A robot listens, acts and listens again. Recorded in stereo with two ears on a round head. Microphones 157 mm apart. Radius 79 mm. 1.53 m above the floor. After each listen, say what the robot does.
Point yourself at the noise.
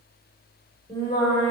Turn 20° left.
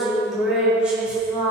Turn 10° right.
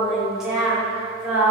Turn 10° right.
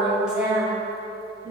Turn 10° right.
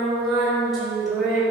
Found it: singing, straight ahead.